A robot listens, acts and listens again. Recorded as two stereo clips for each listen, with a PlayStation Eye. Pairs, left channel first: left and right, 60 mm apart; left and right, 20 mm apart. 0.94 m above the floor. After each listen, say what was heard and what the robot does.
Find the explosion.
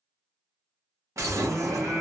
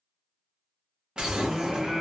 The explosion: about 50° right or 130° right. Turn 50° right.
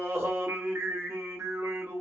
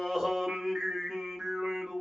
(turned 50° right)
Keep listening.
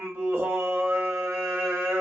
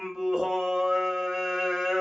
I heard an explosion, but can't make it out now. It was about straight ahead or 80° right.